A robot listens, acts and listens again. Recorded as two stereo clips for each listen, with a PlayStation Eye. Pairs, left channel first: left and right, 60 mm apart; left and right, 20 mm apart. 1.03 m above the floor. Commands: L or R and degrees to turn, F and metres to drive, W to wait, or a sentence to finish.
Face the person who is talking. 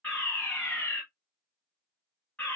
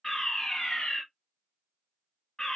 W
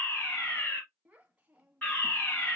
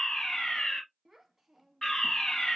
R20
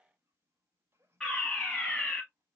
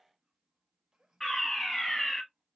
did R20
R135
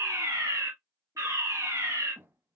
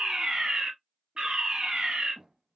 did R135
R40
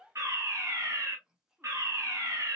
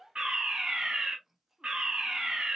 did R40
R10
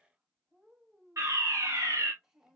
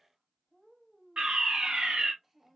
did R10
R10
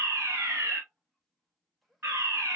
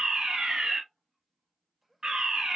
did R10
Found it: a child speaking, straight ahead.